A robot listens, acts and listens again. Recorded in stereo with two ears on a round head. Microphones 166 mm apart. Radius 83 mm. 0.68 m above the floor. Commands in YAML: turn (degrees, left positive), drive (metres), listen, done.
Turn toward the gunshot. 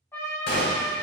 turn: 60
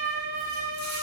listen: true
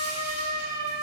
done: "I heard a gunshot, but can't make it out now. It was about straight ahead or 60° left."